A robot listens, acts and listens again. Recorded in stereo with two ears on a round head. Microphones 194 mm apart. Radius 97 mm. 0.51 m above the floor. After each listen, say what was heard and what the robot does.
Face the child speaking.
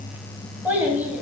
Turn 30° right.
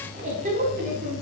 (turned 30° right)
So it is at 140° right. Turn 140° right.
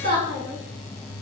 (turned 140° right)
The child speaking is now 60° right. Turn 60° right.
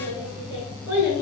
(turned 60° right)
The child speaking is now 10° right. Turn 10° right.
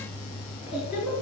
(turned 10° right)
Facing the child speaking.